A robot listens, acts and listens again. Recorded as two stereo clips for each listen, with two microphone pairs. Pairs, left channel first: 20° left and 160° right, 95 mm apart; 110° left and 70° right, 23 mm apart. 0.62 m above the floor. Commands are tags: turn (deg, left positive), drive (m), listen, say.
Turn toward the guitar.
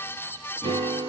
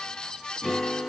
<turn deg="-150"/>
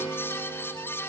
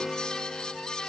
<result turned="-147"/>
<say>Facing the guitar, over 4 m away.</say>